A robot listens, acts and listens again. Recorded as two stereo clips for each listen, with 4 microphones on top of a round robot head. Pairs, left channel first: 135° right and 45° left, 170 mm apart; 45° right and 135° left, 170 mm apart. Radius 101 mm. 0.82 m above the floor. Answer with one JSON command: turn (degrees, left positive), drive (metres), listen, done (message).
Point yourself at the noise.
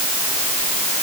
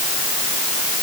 {"listen": true}
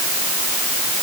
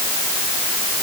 {"listen": true}
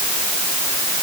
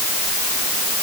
{"done": "I can't make out anything."}